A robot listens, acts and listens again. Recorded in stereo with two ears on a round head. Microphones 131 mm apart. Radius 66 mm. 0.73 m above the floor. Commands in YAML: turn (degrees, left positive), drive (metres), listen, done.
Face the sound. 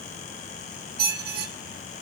turn: -70
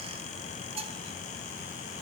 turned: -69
turn: -40
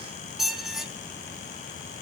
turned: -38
done: "Found it: a squeak, straight ahead, under 1 m away."